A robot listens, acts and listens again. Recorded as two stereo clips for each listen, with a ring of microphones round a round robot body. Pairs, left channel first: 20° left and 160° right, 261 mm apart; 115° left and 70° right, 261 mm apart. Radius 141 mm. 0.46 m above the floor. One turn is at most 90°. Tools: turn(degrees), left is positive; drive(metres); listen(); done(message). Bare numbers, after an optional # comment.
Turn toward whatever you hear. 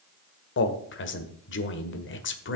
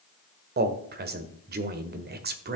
# The man speaking: 20° right.
turn(-20)
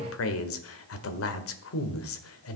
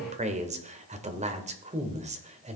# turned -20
done("Found it: a man speaking, straight ahead, 1 to 2 m away.")